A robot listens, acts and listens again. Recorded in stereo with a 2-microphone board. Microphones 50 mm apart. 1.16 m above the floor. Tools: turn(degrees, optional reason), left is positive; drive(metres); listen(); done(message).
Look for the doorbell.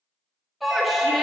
turn(degrees=30)
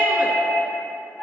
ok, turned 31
turn(degrees=135, reason="So it is at 135° left.")
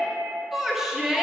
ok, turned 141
listen()
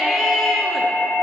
done("Facing the doorbell, 2 to 4 m away.")